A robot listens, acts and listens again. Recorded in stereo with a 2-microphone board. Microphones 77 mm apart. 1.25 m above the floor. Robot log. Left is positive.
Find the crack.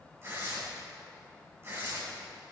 cmd idle
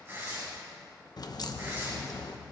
note: The crack: about 60° left or 120° left.
cmd yaw +60
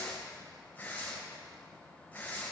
cmd idle
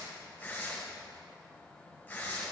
end: I heard a crack, but can't make it out now. It was about straight ahead or 60° left.